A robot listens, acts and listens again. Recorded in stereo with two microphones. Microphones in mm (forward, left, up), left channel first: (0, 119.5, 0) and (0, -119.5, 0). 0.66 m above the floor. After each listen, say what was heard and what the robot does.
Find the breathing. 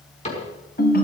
Keep listening.
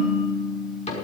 Keep listening.
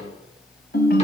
I can't make out breathing, only a ringtone and a cupboard door.